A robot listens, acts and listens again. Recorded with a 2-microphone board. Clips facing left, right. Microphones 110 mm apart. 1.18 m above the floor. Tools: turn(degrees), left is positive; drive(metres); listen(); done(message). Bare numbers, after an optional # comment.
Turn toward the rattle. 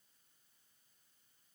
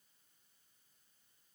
listen()
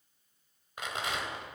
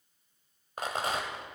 # The rattle: about 40° right or 140° right.
turn(-40)
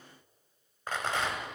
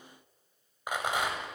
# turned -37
# So it is at 15° right.
turn(-15)
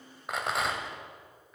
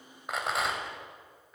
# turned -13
done("Facing the rattle.")